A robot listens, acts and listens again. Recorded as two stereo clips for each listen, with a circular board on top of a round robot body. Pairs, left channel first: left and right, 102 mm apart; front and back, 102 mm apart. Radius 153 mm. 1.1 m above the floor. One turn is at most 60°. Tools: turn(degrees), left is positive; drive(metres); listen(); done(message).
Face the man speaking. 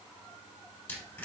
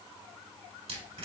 listen()
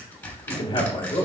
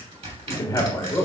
turn(degrees=60)
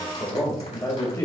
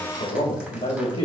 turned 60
turn(degrees=35)
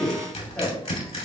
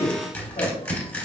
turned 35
turn(degrees=15)
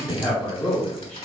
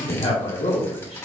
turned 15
turn(degrees=10)
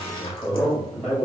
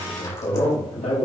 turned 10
done("Found it: a man speaking, straight ahead.")